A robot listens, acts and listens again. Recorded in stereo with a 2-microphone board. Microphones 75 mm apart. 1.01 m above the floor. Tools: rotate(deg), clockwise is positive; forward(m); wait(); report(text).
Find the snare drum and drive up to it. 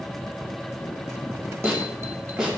rotate(30)
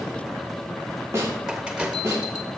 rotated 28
rotate(140)
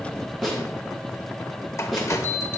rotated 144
forward(1.0)
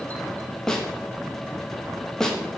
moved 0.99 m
rotate(-10)
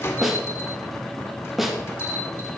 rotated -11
forward(1.0)
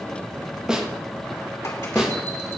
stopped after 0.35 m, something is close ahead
rotate(10)
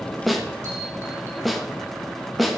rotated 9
report("Arrived at the snare drum, straight ahead.")